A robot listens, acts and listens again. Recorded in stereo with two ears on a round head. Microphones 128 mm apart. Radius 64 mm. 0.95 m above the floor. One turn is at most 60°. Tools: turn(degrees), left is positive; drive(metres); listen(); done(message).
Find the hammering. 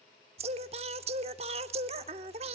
listen()
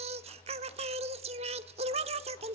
listen()
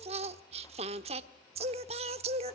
done("I can't make out hammering to turn to.")